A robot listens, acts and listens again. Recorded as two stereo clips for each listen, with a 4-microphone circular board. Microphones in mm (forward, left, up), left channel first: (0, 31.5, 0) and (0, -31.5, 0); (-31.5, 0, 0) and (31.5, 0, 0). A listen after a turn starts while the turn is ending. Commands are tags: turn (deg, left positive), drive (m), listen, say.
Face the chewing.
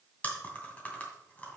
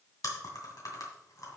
<turn deg="155"/>
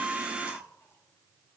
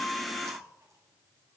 <listen/>
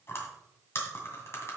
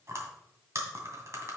<turn deg="40"/>
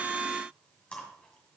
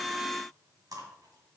<turn deg="15"/>
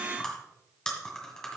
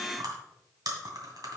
<turn deg="10"/>
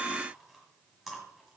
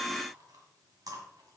<say>Found it: chewing, straight ahead.</say>